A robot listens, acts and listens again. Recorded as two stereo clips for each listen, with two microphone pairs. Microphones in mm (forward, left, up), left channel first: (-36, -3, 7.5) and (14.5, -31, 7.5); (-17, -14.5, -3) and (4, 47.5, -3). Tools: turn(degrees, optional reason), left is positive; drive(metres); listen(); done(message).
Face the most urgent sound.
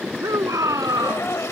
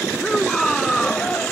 turn(degrees=-25, reason="The shout: 25° right.")
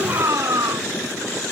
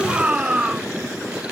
done("Found it: a shout, straight ahead.")